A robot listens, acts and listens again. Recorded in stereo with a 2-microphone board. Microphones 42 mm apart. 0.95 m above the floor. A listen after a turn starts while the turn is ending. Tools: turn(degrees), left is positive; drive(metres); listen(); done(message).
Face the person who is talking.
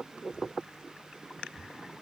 listen()
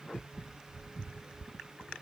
listen()
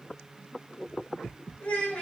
turn(degrees=35)
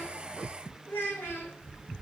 turn(degrees=105)
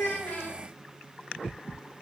listen()
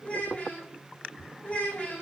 turn(degrees=30)
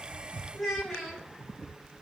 done("Facing the child speaking.")